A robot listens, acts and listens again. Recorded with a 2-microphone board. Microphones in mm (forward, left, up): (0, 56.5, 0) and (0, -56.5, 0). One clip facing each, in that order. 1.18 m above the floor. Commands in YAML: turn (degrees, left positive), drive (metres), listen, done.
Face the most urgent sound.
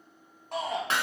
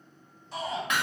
turn: 60
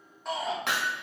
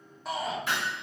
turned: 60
done: "Facing the shout."